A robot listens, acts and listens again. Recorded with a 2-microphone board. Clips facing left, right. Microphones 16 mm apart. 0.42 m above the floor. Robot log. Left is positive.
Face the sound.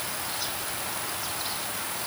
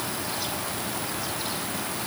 cmd idle
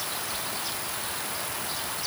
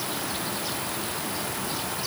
cmd idle
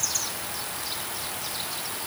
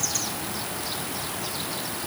end: I can't make out anything.